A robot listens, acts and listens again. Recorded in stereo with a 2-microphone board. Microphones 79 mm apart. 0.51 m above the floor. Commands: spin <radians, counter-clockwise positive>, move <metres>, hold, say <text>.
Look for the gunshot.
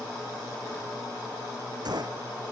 spin -1.05
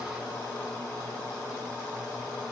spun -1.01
hold
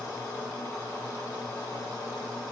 say I heard a gunshot, but can't make it out now. It was about 5° right or 60° right.